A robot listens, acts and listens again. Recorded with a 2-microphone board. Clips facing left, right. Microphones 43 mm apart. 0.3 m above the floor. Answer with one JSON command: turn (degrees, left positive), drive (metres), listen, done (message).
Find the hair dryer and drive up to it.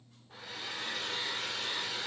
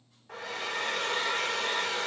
{"turn": -90}
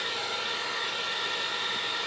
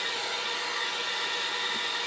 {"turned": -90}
{"drive": 1.0}
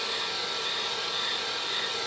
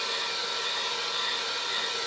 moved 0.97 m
{"drive": 1.0}
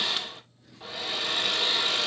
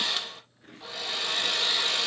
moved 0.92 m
{"turn": 10}
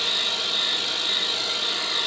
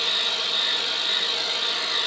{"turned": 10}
{"drive": 1.0}
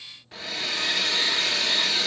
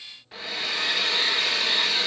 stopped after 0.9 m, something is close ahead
{"done": "I am next to the hair dryer."}